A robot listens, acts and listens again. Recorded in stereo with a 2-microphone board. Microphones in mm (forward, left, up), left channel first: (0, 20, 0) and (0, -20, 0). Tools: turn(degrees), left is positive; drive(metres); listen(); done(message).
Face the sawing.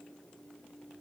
listen()
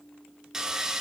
turn(degrees=-30)
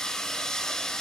turn(degrees=20)
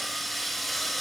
done("Facing the sawing.")